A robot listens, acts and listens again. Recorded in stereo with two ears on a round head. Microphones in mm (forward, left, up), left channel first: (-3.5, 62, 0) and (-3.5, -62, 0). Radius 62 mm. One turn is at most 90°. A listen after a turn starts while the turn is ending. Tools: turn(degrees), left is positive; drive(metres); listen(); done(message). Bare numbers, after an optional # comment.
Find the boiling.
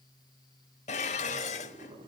# The boiling: about 35° right or 145° right.
turn(-35)
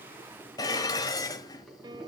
done("Facing the boiling.")